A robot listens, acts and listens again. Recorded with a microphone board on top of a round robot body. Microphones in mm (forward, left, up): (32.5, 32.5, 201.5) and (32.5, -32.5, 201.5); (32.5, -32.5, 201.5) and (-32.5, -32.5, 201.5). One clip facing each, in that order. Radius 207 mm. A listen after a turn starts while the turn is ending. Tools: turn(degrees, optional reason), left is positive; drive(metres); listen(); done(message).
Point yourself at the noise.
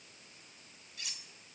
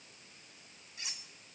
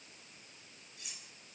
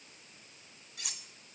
turn(degrees=-155, reason="The cutlery clinking: 155° right.")
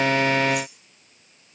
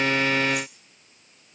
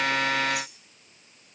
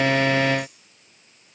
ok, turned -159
listen()
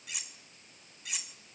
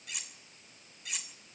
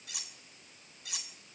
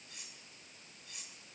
done("Found it: cutlery clinking, straight ahead.")